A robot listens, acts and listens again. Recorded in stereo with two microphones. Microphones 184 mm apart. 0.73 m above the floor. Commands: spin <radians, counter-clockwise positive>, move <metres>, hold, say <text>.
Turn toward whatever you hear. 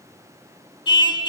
spin 0.44
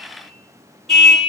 say Facing the car horn, 2 to 4 m away.